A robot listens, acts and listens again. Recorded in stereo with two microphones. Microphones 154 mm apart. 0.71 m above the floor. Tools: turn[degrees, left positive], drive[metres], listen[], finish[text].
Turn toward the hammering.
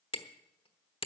Thought: The hammering: about 35° left or 145° left.
Action: turn[35]
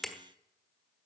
Action: finish[Found it: hammering, straight ahead, 1 to 2 m away.]